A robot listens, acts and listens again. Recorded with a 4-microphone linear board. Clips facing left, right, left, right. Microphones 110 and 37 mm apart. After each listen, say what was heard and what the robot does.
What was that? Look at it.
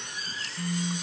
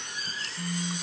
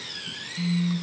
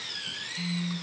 Turn 30° left.
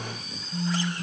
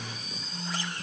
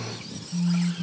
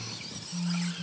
So it is at 150° left. Turn 150° left.
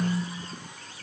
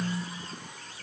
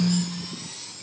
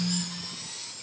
The phone buzzing is now 10° left. Turn 10° left.
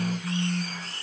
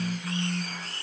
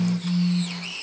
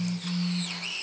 Found it: a phone buzzing, straight ahead.